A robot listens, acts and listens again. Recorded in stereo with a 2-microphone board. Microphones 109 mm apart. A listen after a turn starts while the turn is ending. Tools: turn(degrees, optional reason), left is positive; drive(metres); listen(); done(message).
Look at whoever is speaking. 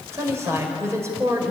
turn(degrees=-25, reason="The woman speaking: about 25° right or 155° right.")
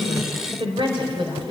turn(degrees=-130, reason="So it is at 130° right.")
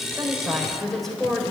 done("Found it: a woman speaking, straight ahead, over 4 m away.")